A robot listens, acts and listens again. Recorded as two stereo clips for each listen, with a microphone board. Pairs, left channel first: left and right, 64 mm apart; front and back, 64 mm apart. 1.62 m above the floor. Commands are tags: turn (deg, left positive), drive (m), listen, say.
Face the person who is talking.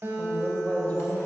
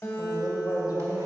<turn deg="25"/>
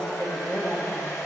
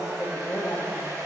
<turn deg="15"/>
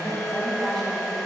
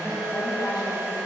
<say>Facing the woman speaking, 1 to 2 m away.</say>